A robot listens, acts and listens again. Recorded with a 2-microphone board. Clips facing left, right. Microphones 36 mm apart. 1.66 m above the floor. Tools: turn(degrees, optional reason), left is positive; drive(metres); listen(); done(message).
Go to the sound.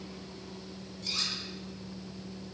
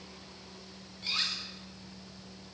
turn(degrees=-30, reason="The cutlery clinking: about 30° right or 150° right.")
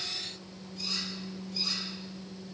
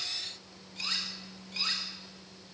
turn(degrees=-115, reason="So it is at 115° right.")
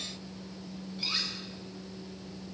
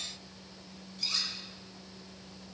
turn(degrees=25, reason="The cutlery clinking is now 25° left.")
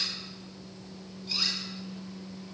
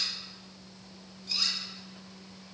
drive(metres=1.0)
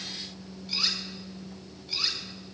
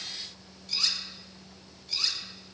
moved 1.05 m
turn(degrees=10, reason="The cutlery clinking is now 10° left.")
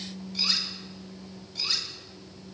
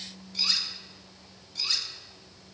drive(metres=1.0)
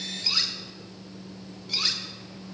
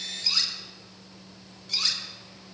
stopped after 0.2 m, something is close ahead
done("Arrived at the cutlery clinking, straight ahead.")